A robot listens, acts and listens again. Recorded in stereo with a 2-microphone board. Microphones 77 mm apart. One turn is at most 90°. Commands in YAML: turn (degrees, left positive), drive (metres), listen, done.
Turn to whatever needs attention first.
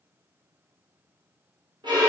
listen: true
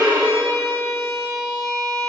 listen: true
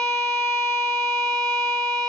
done: "I can't make out anything urgent to turn to."